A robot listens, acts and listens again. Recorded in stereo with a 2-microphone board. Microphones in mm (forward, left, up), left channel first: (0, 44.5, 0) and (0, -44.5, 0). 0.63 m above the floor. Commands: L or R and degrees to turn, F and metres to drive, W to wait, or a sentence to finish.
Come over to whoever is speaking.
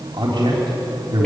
R65
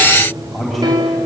F1.0
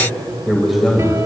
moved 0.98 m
F1.0
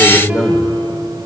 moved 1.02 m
F1.0
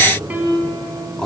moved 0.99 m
L10
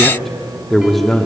F1.0
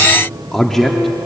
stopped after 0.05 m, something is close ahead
Arrived at the man speaking, straight ahead.